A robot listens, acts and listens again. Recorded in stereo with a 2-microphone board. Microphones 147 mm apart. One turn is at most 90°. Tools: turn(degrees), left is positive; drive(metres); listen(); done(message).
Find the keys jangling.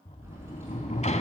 turn(degrees=-15)
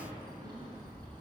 turn(degrees=-25)
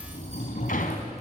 listen()
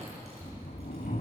listen()
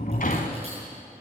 done("I heard keys jangling, but can't make it out now. It was about straight ahead or 130° right.")